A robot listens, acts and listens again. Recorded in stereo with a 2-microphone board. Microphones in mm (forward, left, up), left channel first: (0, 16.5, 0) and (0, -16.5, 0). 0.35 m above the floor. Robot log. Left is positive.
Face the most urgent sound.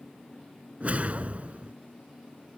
cmd idle
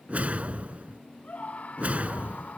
note: The scream: about 50° left or 130° left.
cmd yaw +50
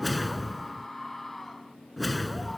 end: Facing the scream.